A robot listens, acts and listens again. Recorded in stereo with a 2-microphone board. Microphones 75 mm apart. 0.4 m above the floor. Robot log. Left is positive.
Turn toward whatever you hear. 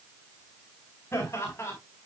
note: The laughter: about 35° left or 145° left.
cmd yaw +35
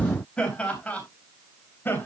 note: The laughter: about 25° left or 155° left.
cmd yaw +25
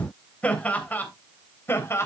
note: The laughter: about 35° left or 145° left.
cmd yaw +35
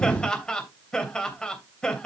note: So it is at 10° left.
cmd yaw +10
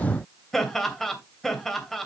end: Found it: laughter, straight ahead.